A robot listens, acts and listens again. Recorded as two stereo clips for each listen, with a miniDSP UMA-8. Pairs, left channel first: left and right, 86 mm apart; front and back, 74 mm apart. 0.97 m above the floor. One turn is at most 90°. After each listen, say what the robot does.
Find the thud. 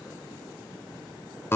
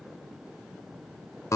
Keep listening.
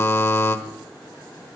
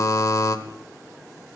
Keep listening.
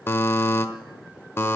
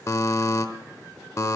I can't make out a thud, only a buzzer.